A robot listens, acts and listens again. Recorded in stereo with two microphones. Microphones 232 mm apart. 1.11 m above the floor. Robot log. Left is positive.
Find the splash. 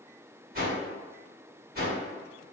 cmd idle
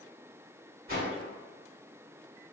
cmd idle
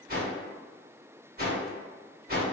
end: I can't make out a splash to turn to.